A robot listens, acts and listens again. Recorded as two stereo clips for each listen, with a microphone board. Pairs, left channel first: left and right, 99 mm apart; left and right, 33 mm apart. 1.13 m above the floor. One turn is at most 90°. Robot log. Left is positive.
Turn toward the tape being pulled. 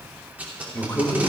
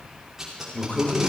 note: The tape being pulled: about 15° right or 165° right.
cmd yaw -15
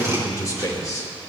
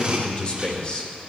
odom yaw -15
cmd idle
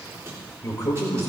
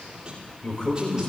cmd idle
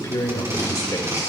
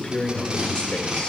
note: So it is at 150° right.
cmd yaw -90
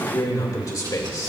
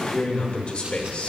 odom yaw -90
note: Nothing new. It was at 60° right.
cmd yaw -60
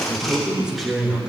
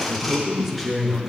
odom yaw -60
end: Found it: tape being pulled, straight ahead, 2 to 4 m away.